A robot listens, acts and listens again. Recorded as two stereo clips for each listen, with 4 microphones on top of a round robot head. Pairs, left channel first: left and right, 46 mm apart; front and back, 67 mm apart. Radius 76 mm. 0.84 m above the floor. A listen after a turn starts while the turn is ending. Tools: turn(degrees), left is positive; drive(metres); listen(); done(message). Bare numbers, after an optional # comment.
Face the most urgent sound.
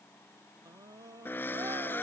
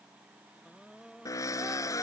# The scream: 90° right.
turn(-90)
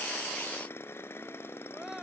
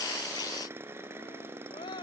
done("Found it: a scream, straight ahead.")